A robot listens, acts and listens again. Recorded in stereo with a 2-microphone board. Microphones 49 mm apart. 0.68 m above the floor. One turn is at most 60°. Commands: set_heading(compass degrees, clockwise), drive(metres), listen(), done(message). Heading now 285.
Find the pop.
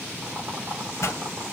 set_heading(225)
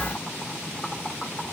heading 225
listen()
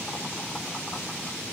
done("I heard a pop, but can't make it out now. It was about 10° left or 50° left.")